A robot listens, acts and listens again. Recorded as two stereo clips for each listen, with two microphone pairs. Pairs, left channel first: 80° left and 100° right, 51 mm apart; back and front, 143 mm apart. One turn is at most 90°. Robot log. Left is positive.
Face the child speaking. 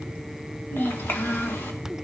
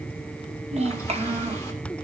note: The child speaking: 40° left.
cmd yaw +40
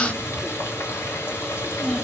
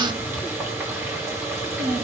end: Found it: a child speaking, straight ahead, 2 to 4 m away.